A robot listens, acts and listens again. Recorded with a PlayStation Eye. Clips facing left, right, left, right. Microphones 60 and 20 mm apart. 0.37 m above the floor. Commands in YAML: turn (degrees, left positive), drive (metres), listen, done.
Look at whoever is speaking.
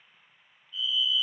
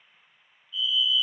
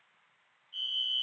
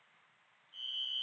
listen: true
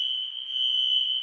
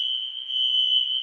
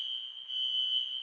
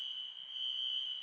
listen: true
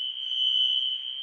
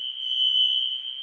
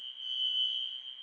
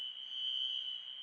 done: "I can't make out anyone speaking to turn to."